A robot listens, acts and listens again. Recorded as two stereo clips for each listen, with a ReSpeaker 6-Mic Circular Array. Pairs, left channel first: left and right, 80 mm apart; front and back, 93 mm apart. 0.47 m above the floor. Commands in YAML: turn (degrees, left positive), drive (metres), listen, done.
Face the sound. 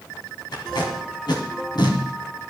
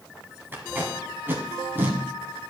turn: 115
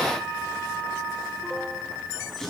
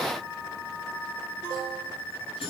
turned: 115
listen: true
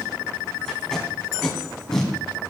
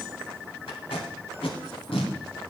done: "Found it: tape being pulled, straight ahead, 2 to 4 m away."